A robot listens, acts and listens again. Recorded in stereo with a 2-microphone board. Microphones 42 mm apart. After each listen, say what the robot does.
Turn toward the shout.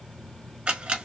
Keep listening.
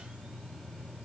Keep listening.
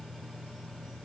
I can't make out a shout, only a camera shutter.